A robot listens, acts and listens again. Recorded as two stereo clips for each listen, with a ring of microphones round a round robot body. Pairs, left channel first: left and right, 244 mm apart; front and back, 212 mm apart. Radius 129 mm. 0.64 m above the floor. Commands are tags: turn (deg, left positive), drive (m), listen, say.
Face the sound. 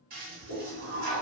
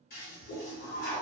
<turn deg="-40"/>
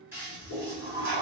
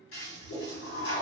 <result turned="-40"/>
<turn deg="-10"/>
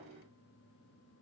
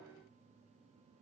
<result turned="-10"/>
<listen/>
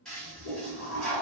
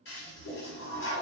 <say>Found it: a toilet flushing, straight ahead, 1 to 2 m away.</say>